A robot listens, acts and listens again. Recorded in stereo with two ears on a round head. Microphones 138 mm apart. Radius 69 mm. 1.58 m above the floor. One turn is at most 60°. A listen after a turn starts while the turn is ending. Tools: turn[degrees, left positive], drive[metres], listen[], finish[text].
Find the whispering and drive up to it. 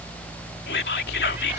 Thought: The whispering: about 70° left or 110° left.
Action: turn[60]
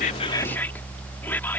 Action: listen[]
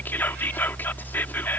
Thought: So it is at 15° left.
Action: turn[15]
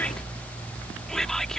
Action: listen[]
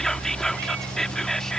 Action: drive[1.0]
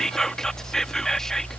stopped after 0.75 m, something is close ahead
Action: finish[Blocked. The whispering is further on, straight ahead.]